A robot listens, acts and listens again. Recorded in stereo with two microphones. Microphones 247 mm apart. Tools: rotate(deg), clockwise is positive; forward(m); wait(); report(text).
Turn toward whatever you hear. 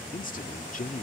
rotate(-35)
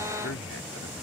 rotate(-110)
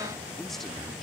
wait()
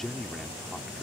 report("Facing the man speaking.")